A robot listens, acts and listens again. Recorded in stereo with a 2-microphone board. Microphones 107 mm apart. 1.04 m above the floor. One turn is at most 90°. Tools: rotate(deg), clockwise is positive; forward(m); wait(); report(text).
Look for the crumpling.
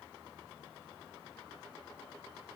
wait()
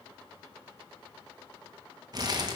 rotate(40)
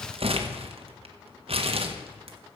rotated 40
rotate(90)
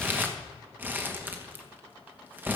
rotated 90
rotate(20)
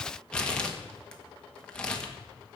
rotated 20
rotate(-10)
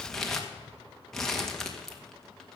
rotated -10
report("Facing the crumpling, 1 to 2 m away.")